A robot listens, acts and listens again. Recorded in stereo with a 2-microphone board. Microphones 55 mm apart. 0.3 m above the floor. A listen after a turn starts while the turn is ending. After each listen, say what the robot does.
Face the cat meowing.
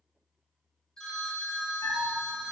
Turn 60° left.
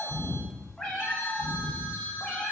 Turn 15° left.
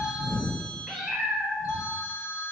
Found it: a cat meowing, straight ahead, under 1 m away.